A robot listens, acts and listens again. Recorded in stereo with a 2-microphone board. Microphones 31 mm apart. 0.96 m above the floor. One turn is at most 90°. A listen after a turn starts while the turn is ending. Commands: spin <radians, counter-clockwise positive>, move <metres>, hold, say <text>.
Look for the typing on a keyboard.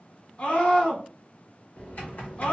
spin 0.96
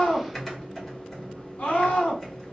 spin 0.17
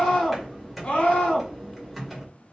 say Found it: typing on a keyboard, straight ahead.